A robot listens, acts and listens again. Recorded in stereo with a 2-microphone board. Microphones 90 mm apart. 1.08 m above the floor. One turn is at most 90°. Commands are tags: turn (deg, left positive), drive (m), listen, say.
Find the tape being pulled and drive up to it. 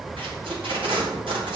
<turn deg="-90"/>
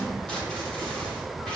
<turn deg="10"/>
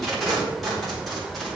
<drive m="1.0"/>
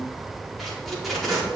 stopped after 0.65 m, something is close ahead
<say>Blocked. The tape being pulled is further on, straight ahead.</say>